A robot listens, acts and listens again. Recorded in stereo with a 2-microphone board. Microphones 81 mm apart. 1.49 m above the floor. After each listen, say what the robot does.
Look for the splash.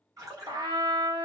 Turn 40° right.
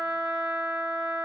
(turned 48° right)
Keep listening.
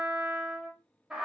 I heard a splash, but can't make it out now. It was about 5° left or 90° right.